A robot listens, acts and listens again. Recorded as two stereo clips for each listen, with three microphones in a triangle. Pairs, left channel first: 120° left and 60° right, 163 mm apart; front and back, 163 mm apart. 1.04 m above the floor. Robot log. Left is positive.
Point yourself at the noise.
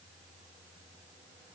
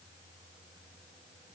cmd idle
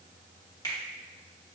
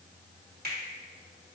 note: The finger snap: 175° right.
cmd yaw -175
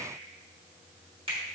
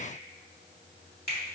end: Facing the finger snap.